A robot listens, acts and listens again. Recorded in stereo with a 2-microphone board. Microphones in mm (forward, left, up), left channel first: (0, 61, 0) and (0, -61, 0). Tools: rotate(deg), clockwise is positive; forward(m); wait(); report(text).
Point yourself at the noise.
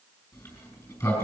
rotate(-25)
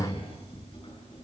rotate(-125)
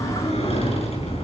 rotate(-50)
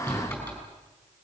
rotate(-10)
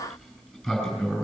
report("Found it: a sliding door, straight ahead, over 4 m away.")